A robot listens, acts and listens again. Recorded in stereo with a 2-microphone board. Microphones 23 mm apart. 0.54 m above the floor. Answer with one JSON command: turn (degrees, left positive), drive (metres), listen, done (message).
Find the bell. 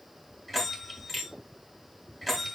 {"turn": 30}
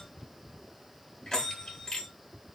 {"turn": 145}
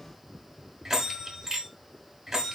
{"turn": -25}
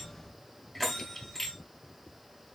{"done": "Found it: a bell, straight ahead, 1 to 2 m away."}